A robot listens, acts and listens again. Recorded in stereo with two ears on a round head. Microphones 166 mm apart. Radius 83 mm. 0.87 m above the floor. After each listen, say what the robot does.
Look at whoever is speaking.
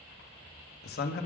Turn 55° left.
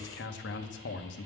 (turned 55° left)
Turn 65° left.
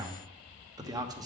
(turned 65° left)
Turn 20° right.
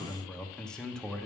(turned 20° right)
Facing the man speaking, under 1 m away.